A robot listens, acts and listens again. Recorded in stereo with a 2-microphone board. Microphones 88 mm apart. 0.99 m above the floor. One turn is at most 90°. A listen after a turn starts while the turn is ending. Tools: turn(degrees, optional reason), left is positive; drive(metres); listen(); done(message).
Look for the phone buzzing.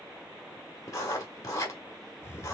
listen()
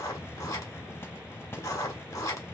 listen()
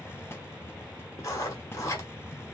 done("I can't make out a phone buzzing to turn to.")